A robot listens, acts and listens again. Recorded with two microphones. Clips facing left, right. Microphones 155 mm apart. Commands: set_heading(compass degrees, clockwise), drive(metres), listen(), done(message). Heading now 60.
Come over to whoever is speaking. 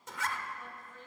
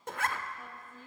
set_heading(85)
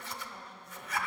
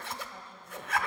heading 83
set_heading(213)
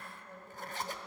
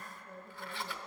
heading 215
drive(1.0)
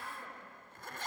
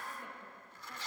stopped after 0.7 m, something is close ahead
listen()
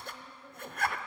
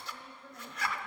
done("Blocked. The woman speaking is further on, straight ahead.")